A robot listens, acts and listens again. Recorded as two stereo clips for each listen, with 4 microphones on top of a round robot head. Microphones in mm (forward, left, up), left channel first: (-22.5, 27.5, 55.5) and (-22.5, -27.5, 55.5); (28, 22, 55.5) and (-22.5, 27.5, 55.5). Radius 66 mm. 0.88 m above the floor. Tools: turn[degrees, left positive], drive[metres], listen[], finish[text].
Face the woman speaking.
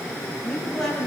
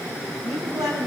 Thought: The woman speaking: 170° left.
Action: turn[170]
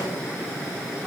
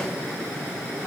Action: listen[]
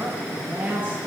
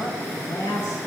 Thought: The woman speaking is now 20° right.
Action: turn[-20]
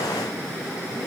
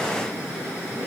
Action: listen[]
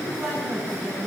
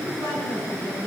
Action: finish[Found it: a woman speaking, straight ahead, over 4 m away.]